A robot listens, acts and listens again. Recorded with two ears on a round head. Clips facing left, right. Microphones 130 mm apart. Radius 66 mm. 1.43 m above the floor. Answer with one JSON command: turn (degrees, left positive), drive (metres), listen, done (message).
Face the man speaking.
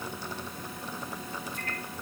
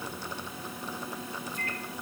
{"listen": true}
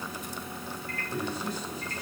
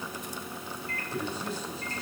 {"turn": 30}
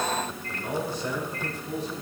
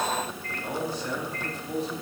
{"turn": 125}
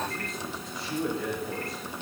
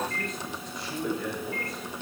{"done": "Found it: a man speaking, straight ahead, over 4 m away."}